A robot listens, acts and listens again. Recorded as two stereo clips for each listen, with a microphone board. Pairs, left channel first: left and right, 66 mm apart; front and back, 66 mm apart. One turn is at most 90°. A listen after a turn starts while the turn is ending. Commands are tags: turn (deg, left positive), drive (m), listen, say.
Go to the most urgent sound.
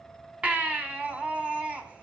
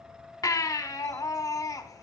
<turn deg="-20"/>
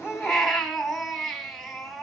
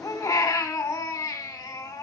<drive m="1.0"/>
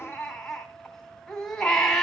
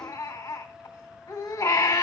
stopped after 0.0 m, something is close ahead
<turn deg="10"/>
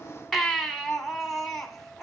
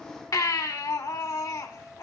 <say>Blocked. The baby crying is further on, straight ahead.</say>